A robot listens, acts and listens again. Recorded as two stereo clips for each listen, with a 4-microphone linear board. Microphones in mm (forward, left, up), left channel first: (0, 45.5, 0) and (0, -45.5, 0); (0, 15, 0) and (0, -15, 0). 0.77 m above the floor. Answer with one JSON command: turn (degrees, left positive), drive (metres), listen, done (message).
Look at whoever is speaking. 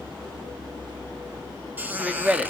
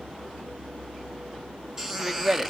{"turn": -30}
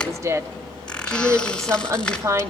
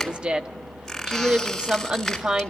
{"turn": -140}
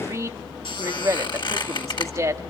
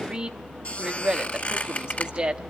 {"turn": -40}
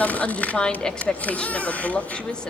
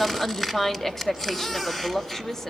{"turn": 10}
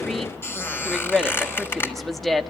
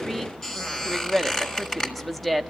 {"done": "Facing the woman speaking."}